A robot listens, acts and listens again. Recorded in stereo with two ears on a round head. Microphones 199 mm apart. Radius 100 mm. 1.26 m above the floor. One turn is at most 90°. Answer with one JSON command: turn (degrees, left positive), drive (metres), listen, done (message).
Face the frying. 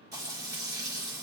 {"turn": -15}
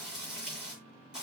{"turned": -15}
{"done": "Found it: frying, straight ahead."}